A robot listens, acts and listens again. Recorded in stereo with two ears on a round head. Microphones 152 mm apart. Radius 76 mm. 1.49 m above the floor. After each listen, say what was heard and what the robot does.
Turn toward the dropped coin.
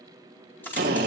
Turn 30° left.
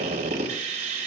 Keep listening.
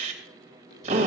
I heard a dropped coin, but can't make it out now. It was about 20° right or 140° left.